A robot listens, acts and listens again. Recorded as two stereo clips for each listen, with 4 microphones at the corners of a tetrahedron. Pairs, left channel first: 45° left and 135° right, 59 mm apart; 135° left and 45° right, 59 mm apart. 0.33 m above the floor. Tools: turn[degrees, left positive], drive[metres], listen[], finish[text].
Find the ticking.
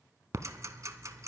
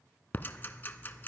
Thought: The ticking: 165° right.
Action: turn[-165]
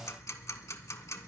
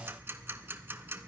Thought: The ticking is now 10° left.
Action: turn[10]
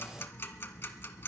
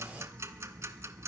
Action: finish[Found it: ticking, straight ahead, under 1 m away.]